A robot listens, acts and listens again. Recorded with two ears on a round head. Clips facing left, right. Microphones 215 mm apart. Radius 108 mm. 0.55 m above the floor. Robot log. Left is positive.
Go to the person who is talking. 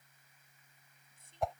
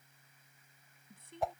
note: The woman speaking: about 50° right or 130° right.
cmd yaw -50
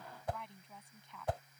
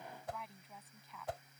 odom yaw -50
cmd fwd 1.0
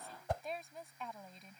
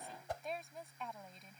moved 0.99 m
cmd fwd 1.0
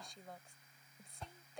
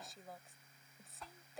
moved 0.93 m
cmd fwd 1.0
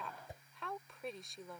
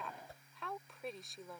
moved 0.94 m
cmd fwd 1.0
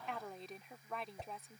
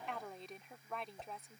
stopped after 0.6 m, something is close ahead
end: Arrived at the woman speaking, straight ahead.